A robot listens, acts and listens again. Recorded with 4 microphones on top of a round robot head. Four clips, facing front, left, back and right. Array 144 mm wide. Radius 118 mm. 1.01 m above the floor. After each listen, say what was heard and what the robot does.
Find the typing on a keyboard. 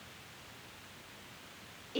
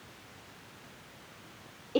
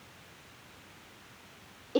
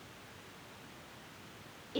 Keep listening.
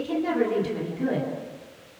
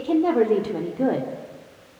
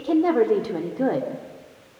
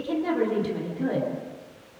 Keep listening.
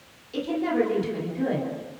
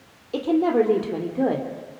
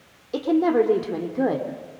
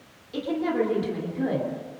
I can't make out typing on a keyboard to turn to.